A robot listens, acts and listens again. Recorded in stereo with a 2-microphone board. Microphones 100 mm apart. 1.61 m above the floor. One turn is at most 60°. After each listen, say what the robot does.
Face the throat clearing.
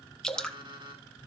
Keep listening.
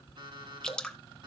Keep listening.
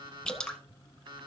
I can't make out throat clearing to turn to.